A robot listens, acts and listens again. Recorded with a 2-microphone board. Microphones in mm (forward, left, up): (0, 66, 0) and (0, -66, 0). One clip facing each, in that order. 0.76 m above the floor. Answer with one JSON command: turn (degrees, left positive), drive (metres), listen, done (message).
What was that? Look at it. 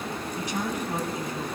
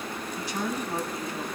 {"turn": 15}
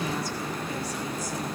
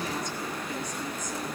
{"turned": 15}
{"turn": 30}
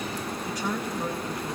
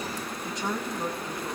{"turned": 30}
{"turn": -20}
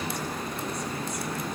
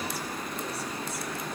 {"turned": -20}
{"listen": true}
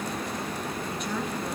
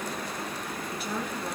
{"done": "Found it: a woman speaking, straight ahead, over 4 m away."}